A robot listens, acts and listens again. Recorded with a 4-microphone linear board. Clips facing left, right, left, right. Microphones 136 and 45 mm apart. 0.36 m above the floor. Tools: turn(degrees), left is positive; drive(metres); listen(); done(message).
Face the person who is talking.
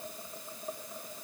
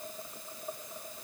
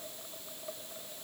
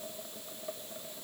listen()
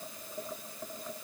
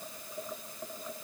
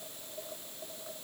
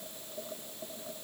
listen()
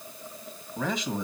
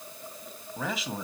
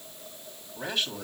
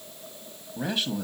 turn(degrees=-30)
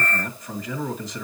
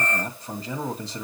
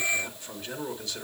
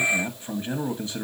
turn(degrees=-140)
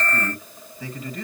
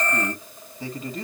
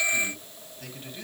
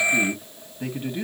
turn(degrees=-35)
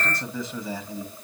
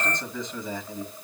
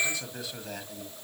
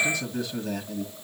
done("Facing the man speaking, 1 to 2 m away.")